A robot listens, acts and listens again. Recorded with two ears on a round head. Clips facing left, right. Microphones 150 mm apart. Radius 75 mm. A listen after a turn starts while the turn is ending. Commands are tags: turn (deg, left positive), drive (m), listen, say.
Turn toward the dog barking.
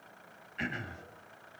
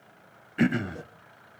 <listen/>
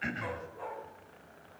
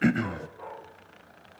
<turn deg="40"/>
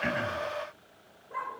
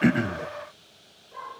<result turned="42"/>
<turn deg="105"/>
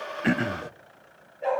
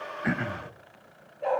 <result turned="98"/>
<say>Found it: a dog barking, straight ahead.</say>